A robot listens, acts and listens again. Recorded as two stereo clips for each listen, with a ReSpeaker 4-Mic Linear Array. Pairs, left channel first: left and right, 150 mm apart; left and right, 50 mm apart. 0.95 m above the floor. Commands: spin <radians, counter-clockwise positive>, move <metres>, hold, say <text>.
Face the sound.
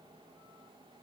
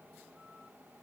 hold
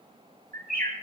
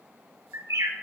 spin -1.57
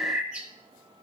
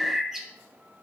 say Facing the bird, 1 to 2 m away.